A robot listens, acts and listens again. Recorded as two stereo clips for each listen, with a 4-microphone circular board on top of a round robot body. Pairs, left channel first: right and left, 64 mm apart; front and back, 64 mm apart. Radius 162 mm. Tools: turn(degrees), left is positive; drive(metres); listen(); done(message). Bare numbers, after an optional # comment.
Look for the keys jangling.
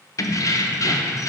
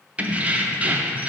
# The keys jangling: 115° right.
turn(-115)
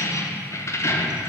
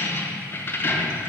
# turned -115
# The keys jangling is now 50° right.
turn(-50)
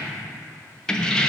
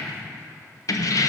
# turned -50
# The keys jangling is now 15° right.
turn(-15)
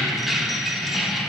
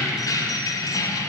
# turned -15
done("Facing the keys jangling, under 1 m away.")